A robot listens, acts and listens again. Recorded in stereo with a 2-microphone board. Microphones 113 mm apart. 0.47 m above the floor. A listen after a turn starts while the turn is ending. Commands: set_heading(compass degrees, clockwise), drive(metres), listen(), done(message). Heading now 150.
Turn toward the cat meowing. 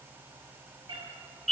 set_heading(195)
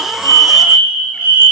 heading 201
listen()
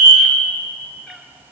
done("Facing the cat meowing, 2 to 4 m away.")